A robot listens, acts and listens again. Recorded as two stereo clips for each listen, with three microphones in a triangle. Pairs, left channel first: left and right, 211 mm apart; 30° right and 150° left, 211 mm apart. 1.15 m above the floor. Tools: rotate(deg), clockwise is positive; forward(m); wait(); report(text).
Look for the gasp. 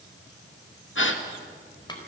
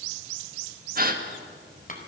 rotate(-105)
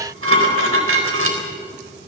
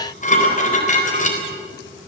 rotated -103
report("Facing where the gasp came from. I can't hear it now.")